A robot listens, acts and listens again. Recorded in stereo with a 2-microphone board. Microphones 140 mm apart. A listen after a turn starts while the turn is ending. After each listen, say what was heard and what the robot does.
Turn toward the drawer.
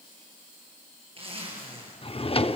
The drawer: about 40° left or 140° left. Turn 40° left.
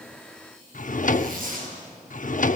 So it is at 90° left. Turn 90° left.
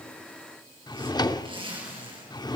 The drawer is now 30° left. Turn 30° left.
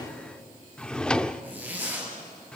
Found it: a drawer, straight ahead.